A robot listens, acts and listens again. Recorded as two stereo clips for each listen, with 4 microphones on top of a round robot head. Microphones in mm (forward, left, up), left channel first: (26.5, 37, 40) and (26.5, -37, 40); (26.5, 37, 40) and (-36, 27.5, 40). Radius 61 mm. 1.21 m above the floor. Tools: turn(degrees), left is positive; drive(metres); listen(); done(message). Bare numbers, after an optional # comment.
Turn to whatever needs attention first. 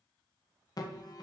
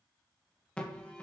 # The alarm: 80° left.
turn(80)
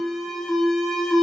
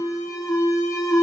done("Found it: an alarm, straight ahead.")